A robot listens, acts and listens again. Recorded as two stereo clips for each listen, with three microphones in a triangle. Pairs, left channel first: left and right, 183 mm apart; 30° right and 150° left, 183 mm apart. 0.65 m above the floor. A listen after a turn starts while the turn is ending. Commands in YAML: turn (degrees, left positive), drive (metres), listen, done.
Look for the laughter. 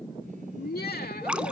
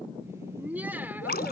turn: 70
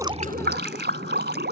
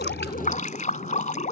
listen: true
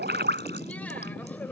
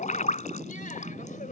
listen: true
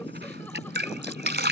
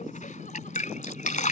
done: "I heard laughter from this way, but can't make it out now."